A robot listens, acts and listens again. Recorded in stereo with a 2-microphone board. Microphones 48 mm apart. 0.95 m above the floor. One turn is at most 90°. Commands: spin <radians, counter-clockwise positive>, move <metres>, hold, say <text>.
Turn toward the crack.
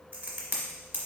spin -0.70
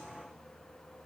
hold
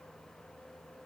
say I heard a crack, but can't make it out now. It was about straight ahead or 100° right.